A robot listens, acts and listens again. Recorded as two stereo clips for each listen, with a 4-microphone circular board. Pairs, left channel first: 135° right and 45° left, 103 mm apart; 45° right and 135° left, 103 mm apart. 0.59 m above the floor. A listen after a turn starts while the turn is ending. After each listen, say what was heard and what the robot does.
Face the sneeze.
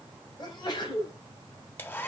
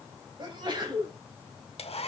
The sneeze: straight behind. Turn 180° left.
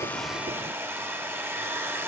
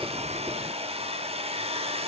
Facing where the sneeze came from. I can't hear it now.